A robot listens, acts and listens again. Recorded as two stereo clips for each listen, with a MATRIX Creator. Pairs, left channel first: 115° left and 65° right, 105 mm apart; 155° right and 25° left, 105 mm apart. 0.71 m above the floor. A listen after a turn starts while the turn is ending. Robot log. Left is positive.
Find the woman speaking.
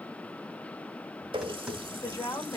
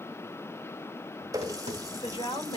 note: The woman speaking: 170° left.
cmd yaw +170
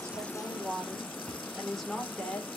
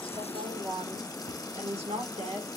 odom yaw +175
note: The woman speaking is now 35° left.
cmd yaw +35
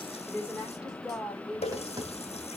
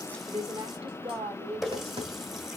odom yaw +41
note: The woman speaking is now 25° left.
cmd yaw +25
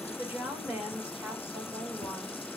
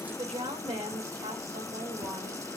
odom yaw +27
end: Facing the woman speaking.